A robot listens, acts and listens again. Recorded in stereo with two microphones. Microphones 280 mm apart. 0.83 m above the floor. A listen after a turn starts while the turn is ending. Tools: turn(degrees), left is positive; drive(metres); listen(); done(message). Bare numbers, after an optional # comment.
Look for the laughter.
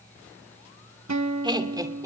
turn(-30)
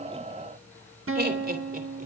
# So it is at 150° right.
turn(-150)
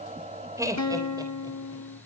# The laughter is now 15° right.
turn(-15)
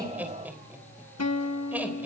done("Found it: laughter, straight ahead.")